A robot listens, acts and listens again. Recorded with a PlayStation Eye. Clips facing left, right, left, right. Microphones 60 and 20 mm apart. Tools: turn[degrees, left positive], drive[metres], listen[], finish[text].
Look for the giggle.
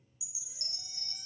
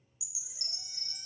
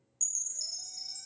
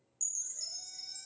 Action: listen[]
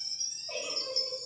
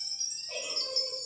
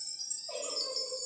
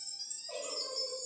Thought: The giggle: about 30° left or 150° left.
Action: turn[30]
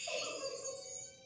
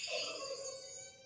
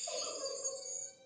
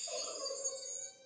Thought: So it is at 125° left.
Action: turn[125]
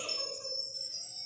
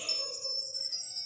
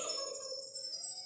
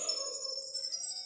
Action: listen[]
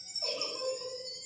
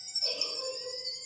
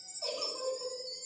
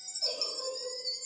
Thought: The giggle is now 50° left.
Action: turn[50]
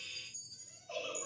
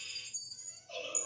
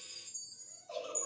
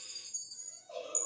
Thought: The giggle is now 20° left.
Action: turn[20]
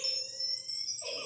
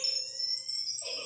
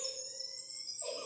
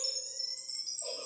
Thought: The giggle is now 10° left.
Action: turn[10]
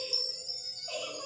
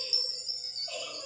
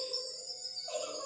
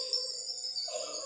Action: finish[Found it: a giggle, straight ahead, 2 to 4 m away.]